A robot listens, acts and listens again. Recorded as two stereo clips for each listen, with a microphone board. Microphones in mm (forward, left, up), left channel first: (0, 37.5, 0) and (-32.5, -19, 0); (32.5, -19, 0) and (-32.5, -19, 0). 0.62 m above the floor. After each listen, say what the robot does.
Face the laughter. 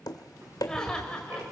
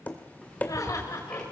Turn 20° right.
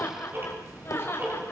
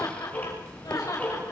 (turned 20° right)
Turn 10° left.
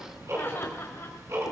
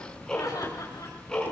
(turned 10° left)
Keep listening.
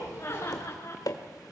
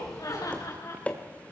Turn 15° left.
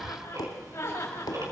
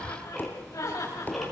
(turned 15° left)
Turn 10° left.
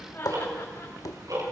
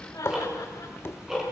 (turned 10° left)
Found it: laughter, straight ahead.